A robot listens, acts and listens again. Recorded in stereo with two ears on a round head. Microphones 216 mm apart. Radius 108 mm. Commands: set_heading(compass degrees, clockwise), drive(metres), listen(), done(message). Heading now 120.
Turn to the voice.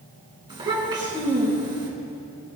set_heading(140)
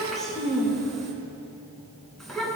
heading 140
done("Facing the child speaking, 2 to 4 m away.")